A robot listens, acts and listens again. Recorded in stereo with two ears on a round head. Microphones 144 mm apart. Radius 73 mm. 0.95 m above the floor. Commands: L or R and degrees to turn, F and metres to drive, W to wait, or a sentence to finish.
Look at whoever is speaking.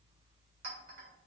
W
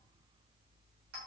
W
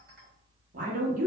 R55
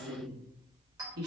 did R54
R70
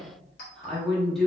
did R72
Found it: a woman speaking, straight ahead, 1 to 2 m away.